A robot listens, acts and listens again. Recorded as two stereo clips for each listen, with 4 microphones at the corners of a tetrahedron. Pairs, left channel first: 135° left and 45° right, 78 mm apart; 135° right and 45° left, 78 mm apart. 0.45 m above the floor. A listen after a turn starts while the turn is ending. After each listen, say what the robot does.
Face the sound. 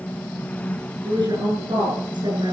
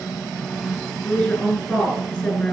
Turn 60° right.
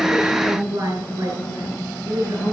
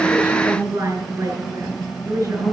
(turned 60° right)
Found it: a woman speaking, straight ahead, over 4 m away.